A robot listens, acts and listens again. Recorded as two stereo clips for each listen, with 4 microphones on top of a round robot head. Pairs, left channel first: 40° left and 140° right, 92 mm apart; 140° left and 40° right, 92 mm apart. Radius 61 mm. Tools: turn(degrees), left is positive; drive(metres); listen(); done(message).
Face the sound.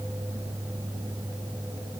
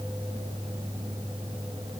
listen()
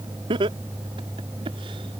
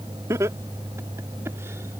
turn(degrees=-105)
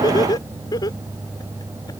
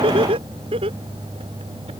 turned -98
turn(degrees=-10)
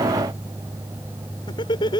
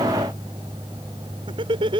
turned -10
done("Facing the laughter.")